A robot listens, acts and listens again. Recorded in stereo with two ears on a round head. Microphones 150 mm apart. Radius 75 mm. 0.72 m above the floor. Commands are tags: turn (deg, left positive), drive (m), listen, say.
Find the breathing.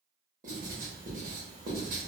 <listen/>
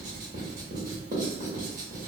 <listen/>
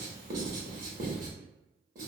<say>I can't make out breathing, only writing.</say>